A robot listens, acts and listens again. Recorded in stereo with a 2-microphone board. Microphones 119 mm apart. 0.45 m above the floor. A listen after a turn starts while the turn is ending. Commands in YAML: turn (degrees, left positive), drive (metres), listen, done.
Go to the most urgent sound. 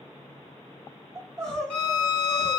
turn: 30
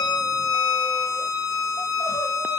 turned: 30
listen: true
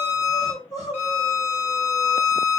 turn: 140
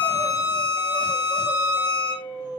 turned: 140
turn: 45
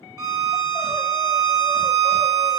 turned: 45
listen: true
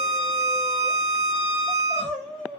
drive: 1.0
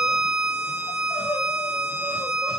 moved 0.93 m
turn: 10
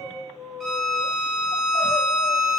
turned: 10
drive: 1.0
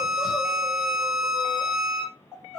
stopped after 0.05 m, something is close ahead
done: "Arrived at the crying, straight ahead."